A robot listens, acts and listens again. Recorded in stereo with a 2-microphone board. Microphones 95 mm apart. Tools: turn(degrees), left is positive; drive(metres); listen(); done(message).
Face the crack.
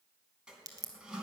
turn(degrees=-40)
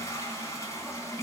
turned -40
listen()
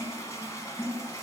done("I heard a crack, but can't make it out now. It was about straight ahead or 100° right.")